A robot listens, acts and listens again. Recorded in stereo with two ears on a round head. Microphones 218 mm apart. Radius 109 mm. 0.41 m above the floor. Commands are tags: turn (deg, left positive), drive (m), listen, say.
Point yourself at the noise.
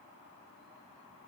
<listen/>
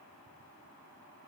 <listen/>
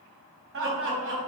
<turn deg="-50"/>
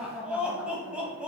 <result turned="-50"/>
<say>Facing the laughter.</say>